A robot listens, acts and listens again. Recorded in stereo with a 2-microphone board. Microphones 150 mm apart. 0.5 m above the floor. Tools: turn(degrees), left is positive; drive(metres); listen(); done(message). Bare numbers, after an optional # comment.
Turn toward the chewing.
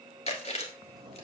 # The chewing: about 45° left or 135° left.
turn(45)
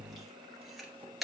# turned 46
done("Found it: chewing, straight ahead.")